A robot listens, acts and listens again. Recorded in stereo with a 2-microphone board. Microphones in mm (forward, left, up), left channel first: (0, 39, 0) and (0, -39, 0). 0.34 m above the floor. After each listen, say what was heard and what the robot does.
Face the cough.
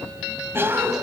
The cough: about 30° right or 150° right. Turn 30° right.
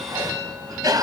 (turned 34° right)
So it is at 110° right. Turn 110° right.
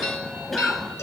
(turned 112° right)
Facing the cough.